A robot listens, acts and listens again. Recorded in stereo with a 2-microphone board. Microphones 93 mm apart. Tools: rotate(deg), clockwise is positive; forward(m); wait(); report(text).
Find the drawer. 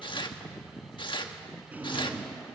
rotate(20)
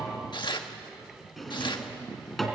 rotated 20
report("Found it: a drawer, straight ahead.")